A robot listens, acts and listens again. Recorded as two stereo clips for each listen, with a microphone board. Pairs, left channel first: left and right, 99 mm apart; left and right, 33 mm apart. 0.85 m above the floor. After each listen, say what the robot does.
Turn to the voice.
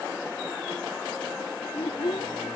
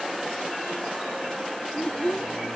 Turn 60° left.
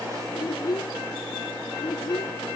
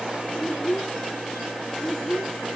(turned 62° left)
Turn 55° left.
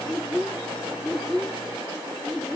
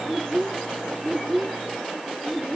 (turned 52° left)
Found it: a child speaking, straight ahead.